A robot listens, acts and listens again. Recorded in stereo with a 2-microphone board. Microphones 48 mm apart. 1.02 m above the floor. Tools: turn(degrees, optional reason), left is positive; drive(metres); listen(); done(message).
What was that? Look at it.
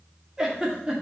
turn(degrees=-30)
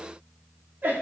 turn(degrees=-135, reason="So it is at 135° right.")
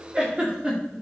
turn(degrees=-25, reason="The giggle is now 25° right.")
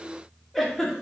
done("Facing the giggle.")